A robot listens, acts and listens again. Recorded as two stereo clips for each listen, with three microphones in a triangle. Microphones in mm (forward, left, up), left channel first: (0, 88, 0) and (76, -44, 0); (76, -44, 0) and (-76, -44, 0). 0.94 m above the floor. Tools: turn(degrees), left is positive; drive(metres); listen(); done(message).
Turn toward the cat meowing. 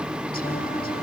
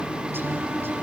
listen()
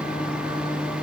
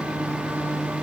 listen()
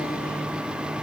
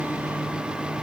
done("I can't make out a cat meowing to turn to.")